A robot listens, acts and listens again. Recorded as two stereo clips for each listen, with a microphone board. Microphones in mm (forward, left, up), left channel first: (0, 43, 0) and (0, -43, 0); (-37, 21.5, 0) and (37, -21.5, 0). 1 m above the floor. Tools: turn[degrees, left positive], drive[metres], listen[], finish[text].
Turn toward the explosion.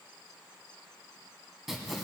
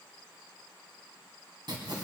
Action: listen[]
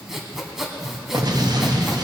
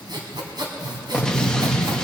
Thought: The explosion: 130° right.
Action: turn[-130]
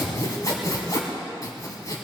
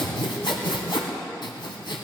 Action: finish[Facing where the explosion came from. I can't hear it now.]